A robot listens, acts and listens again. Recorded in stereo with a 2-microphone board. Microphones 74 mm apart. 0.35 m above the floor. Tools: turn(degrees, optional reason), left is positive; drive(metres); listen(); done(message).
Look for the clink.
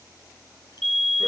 listen()
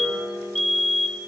listen()
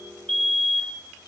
done("I can't make out a clink to turn to.")